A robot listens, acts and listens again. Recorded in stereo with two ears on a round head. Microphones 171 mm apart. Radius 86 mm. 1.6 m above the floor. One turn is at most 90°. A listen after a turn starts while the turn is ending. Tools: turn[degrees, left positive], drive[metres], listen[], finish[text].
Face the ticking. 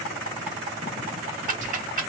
Thought: The ticking: about 45° right or 135° right.
Action: turn[-45]
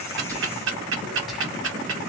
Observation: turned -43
Thought: So it is at 90° right.
Action: turn[-90]
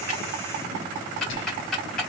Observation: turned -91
Action: finish[Found it: ticking, straight ahead.]